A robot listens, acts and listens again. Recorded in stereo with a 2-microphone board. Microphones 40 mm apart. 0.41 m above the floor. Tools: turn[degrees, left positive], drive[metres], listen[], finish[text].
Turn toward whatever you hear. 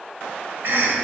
Thought: The cough: about 55° right or 125° right.
Action: turn[-55]
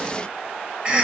Thought: So it is at 30° right.
Action: turn[-30]
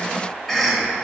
Action: finish[Facing the cough.]